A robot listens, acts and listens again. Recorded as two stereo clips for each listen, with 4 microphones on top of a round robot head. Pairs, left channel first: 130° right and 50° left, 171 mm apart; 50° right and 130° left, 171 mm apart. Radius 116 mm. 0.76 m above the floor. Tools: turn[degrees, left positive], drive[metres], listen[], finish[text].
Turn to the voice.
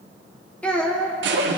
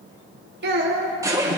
Thought: The child speaking: 145° left.
Action: turn[145]
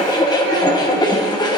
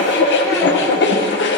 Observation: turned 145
Action: listen[]
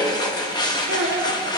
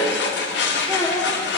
Thought: The child speaking is now 25° left.
Action: turn[25]
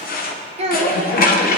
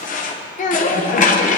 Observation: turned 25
Action: finish[Facing the child speaking, 1 to 2 m away.]